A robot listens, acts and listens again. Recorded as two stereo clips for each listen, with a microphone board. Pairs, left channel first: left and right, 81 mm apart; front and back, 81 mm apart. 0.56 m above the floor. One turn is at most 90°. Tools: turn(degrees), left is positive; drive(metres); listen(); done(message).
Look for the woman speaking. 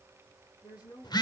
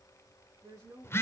turn(degrees=90)
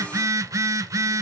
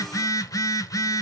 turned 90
turn(degrees=40)
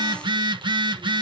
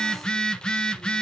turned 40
listen()
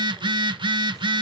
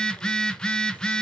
done("I heard a woman speaking from this way, but can't make it out now.")